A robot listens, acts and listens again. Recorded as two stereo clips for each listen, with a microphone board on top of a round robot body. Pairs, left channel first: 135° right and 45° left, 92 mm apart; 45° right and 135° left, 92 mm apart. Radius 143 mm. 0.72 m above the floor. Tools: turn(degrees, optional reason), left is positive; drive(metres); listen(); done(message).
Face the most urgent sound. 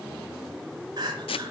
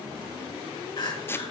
done("Found it: crying, straight ahead.")